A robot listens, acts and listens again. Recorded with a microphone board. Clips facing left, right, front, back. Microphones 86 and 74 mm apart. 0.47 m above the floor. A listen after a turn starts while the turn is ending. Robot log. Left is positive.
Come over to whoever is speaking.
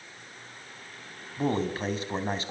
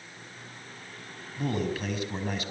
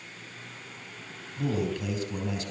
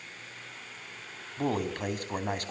note: The man speaking: 145° left.
cmd yaw +145
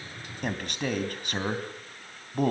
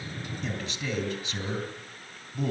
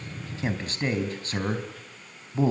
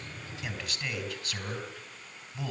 note: The man speaking is now 55° left.
cmd yaw +55
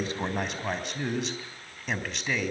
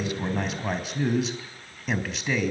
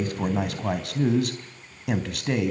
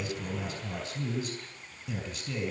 cmd fwd 1.0
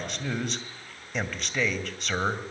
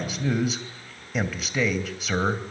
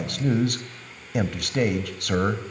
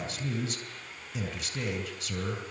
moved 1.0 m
cmd fwd 1.0
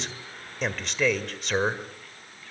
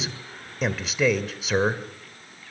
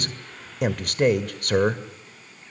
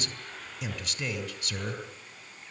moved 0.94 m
cmd fwd 1.0
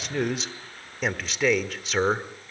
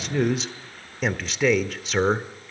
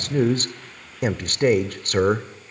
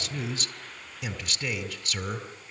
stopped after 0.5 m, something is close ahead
end: Arrived at the man speaking, straight ahead.